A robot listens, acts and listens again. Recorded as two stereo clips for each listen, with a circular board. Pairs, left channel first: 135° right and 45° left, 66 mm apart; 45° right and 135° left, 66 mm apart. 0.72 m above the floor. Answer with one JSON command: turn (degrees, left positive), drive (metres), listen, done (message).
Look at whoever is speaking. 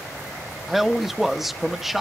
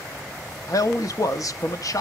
{"turn": -40}
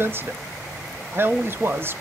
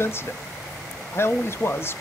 {"done": "Found it: a man speaking, straight ahead, under 1 m away."}